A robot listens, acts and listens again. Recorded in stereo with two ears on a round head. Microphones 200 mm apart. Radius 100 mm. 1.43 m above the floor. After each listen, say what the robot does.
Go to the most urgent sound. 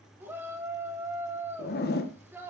Turn 30° right.
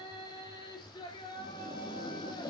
Turn 20° left.
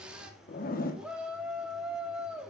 Drive 1.0 m forward.
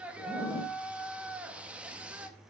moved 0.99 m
Drive 1.0 m forward.
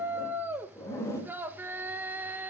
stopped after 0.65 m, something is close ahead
Turn 10° right.
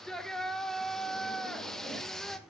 Arrived at the shout, straight ahead.